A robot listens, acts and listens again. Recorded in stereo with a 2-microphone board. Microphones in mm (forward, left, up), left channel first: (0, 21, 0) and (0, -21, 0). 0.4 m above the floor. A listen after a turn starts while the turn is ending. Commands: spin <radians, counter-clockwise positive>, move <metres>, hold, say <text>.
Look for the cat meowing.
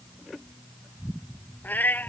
spin 0.87
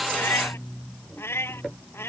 spin 1.40
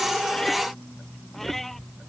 hold
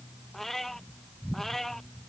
say Facing the cat meowing.